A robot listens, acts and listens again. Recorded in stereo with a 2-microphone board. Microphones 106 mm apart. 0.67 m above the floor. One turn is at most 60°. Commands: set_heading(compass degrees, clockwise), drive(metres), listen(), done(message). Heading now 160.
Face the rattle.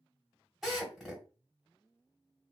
listen()
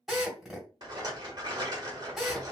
set_heading(200)
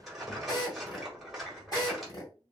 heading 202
done("Found it: a rattle, straight ahead.")